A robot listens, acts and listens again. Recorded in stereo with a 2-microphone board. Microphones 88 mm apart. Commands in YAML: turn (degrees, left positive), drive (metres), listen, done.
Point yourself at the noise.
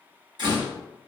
turn: -55
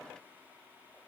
listen: true
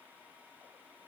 done: "I heard a door slam, but can't make it out now. It was about straight ahead or 70° right."